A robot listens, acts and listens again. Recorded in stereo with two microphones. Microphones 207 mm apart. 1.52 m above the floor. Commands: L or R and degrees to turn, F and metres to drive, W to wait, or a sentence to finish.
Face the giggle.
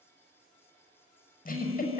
L40
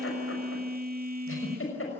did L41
L100
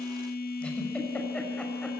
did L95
W
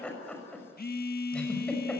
Facing the giggle.